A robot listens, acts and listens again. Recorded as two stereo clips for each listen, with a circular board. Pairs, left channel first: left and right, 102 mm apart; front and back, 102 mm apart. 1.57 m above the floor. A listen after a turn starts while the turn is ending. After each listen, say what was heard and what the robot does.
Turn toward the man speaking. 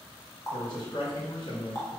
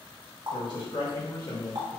The man speaking: 50° left. Turn 50° left.
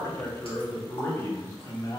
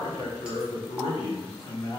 The man speaking is now 40° left. Turn 40° left.
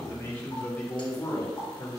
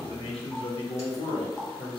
The man speaking is now 35° left. Turn 35° left.
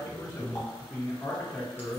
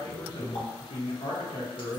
The man speaking is now 10° left. Turn 10° left.
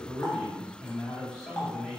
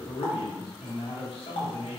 Found it: a man speaking, straight ahead.